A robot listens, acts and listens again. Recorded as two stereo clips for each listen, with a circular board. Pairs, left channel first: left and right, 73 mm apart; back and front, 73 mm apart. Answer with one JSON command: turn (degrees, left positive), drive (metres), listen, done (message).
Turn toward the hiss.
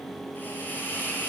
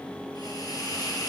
{"turn": 150}
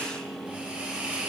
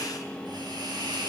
{"turn": -15}
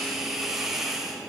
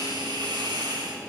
{"done": "Facing the hiss, 2 to 4 m away."}